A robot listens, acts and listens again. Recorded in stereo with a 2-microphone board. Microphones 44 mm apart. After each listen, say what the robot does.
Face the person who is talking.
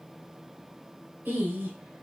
Turn 55° right.
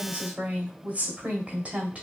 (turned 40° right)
Turn 40° right.
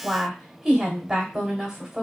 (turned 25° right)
Turn 15° right.
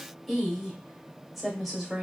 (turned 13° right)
Found it: a woman speaking, straight ahead, 1 to 2 m away.